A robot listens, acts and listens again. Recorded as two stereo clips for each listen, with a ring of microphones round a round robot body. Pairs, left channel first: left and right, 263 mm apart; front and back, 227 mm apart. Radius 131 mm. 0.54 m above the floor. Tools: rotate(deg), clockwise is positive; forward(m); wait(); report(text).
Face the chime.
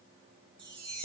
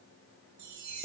rotate(165)
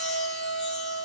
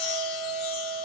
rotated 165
wait()
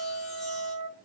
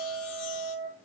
wait()
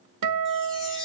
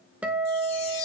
report("Facing the chime, over 4 m away.")